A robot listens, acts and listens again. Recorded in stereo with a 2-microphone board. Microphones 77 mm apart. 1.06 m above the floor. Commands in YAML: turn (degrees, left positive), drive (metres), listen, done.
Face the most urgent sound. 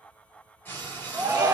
turn: -30
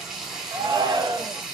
turn: -120
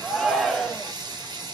done: "Facing the shout."